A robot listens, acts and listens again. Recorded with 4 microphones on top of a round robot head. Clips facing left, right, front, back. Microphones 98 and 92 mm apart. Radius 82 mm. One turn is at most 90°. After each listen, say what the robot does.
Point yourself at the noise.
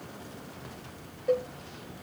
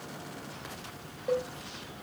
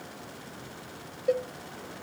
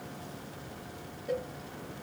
Facing the cowbell.